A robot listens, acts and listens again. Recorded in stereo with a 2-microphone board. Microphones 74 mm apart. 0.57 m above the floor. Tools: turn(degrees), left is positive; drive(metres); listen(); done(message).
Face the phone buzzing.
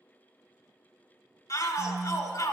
turn(degrees=-30)
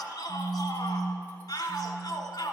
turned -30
turn(degrees=-125)
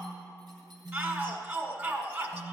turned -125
done("Found it: a phone buzzing, straight ahead, 1 to 2 m away.")